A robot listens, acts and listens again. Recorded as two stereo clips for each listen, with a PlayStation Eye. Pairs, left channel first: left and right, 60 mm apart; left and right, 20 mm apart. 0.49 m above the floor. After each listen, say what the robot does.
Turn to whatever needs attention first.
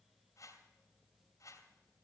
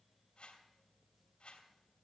Keep listening.
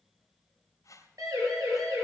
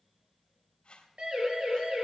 Turn 90° right.
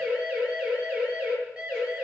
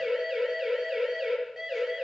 Turn 15° right.
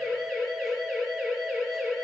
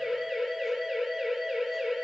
Found it: a siren, straight ahead, over 4 m away.